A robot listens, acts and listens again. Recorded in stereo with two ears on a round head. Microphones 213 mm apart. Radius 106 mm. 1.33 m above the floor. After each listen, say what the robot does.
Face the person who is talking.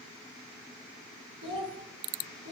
Turn 60° right.
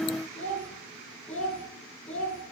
Found it: a child speaking, straight ahead, over 4 m away.